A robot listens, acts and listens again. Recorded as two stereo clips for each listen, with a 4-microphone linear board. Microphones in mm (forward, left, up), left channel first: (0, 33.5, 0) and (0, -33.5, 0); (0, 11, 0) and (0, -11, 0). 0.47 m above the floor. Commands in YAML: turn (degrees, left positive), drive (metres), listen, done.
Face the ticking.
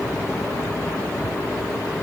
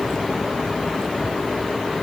listen: true
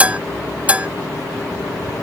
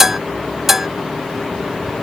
listen: true
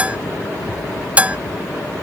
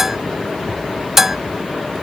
done: "I can't make out ticking, only dishes clattering."